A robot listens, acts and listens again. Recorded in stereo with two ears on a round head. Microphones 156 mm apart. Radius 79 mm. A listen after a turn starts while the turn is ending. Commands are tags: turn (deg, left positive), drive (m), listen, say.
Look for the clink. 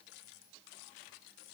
<listen/>
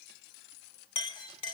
<turn deg="30"/>
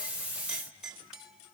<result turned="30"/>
<say>Facing the clink.</say>